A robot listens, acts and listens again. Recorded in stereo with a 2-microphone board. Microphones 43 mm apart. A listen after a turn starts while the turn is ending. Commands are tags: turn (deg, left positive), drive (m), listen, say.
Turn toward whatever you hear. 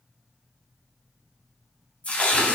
<turn deg="35"/>
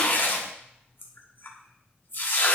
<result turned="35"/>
<turn deg="105"/>
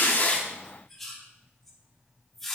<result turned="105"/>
<turn deg="10"/>
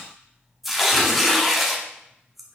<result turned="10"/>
<say>Facing the tearing paper, 1 to 2 m away.</say>